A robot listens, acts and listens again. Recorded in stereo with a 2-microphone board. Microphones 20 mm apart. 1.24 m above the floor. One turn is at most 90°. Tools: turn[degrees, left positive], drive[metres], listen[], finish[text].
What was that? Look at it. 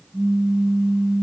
Thought: The pop: about 30° right or 150° right.
Action: turn[-30]
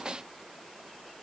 Action: listen[]
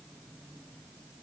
Action: finish[I heard a pop, but can't make it out now. It was about straight ahead or 120° right.]